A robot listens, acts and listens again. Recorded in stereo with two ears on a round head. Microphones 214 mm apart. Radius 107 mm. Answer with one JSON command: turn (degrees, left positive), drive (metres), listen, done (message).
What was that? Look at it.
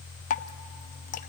{"turn": 35}
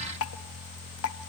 {"turn": 110}
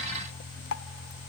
{"turn": 55}
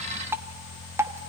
{"turn": -10}
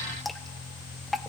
{"done": "Found it: dripping, straight ahead, under 1 m away."}